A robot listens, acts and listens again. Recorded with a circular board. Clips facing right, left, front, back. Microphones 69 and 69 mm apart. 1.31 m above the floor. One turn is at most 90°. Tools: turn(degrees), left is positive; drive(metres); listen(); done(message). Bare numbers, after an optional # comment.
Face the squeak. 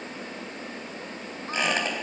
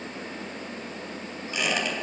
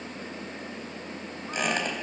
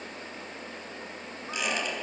# The squeak: 40° right.
turn(-40)
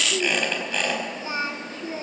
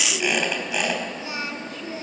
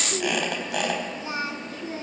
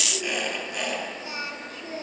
# The squeak is now 10° left.
turn(10)
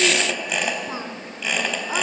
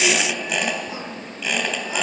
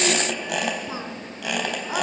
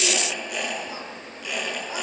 done("Facing the squeak, 2 to 4 m away.")